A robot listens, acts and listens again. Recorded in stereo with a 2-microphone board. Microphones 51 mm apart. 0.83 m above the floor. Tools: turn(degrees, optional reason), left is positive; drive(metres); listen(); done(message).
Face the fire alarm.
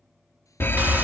turn(degrees=45, reason="The fire alarm: about 45° left or 135° left.")
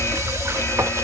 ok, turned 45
turn(degrees=85, reason="So it is at 85° left.")
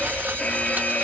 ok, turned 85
turn(degrees=30, reason="The fire alarm is now 30° left.")
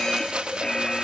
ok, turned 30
turn(degrees=10, reason="The fire alarm is now 10° left.")
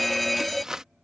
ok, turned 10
done("Facing the fire alarm.")